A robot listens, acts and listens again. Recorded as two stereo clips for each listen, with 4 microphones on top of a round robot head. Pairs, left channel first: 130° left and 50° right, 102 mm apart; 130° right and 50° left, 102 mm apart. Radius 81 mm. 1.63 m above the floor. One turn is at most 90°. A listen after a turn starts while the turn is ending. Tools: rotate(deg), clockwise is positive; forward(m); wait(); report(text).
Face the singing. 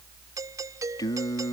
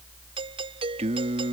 rotate(-70)
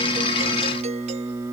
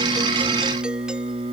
rotate(-15)
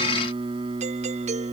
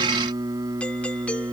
rotate(15)
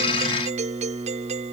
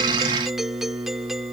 report("Found it: singing, straight ahead.")